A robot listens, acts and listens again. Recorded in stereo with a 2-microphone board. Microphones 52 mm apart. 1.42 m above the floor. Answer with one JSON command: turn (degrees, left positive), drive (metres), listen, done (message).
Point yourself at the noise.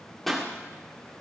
{"turn": 30}
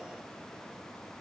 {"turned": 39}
{"listen": true}
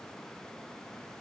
{"done": "I heard a pop, but can't make it out now. It was about 35° right or 135° left."}